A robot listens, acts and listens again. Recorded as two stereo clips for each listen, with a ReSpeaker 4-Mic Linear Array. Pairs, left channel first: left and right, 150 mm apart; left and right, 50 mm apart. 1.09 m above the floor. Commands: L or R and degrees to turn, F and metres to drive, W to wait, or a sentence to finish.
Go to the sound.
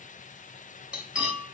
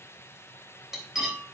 R30
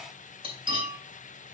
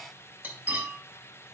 R145
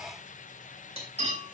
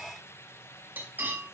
R45
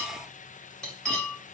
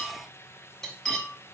F1.0
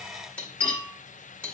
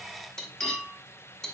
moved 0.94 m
L10
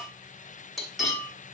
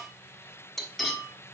F1.0
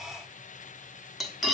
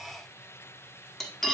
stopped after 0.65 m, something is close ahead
Arrived at the cutlery clinking, straight ahead.